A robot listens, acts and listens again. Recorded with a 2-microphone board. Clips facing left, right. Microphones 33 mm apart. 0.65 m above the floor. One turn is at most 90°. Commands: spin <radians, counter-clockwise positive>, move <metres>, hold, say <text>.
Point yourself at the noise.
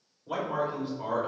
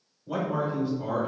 spin 0.87
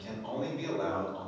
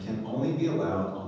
spin 0.52
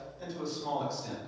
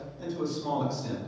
say Found it: a man speaking, straight ahead.